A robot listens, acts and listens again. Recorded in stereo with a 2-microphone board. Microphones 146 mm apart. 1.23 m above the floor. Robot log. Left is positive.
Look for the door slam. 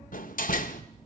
note: The door slam: about 70° left or 110° left.
cmd yaw +70
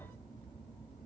cmd idle
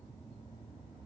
end: I heard a door slam, but can't make it out now. It was about straight ahead or 40° left.